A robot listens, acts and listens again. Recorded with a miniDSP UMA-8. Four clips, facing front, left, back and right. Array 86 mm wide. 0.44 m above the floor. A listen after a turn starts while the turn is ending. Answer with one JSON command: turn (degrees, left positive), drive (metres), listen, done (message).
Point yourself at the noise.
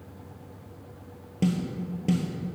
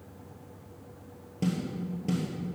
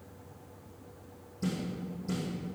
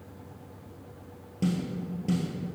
{"done": "Facing the snare drum."}